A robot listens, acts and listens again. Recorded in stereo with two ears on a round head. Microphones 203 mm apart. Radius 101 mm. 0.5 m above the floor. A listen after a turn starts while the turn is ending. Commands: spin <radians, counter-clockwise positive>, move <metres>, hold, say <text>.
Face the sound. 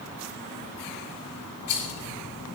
spin 1.57
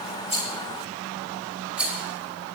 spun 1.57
say Facing the rattle.